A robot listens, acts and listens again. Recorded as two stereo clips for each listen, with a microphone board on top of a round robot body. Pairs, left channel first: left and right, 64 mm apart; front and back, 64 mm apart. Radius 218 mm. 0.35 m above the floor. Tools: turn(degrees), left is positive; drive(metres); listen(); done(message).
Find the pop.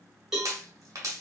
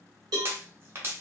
turn(degrees=-125)
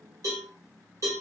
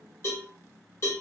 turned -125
done("I heard a pop from this way, but can't make it out now.")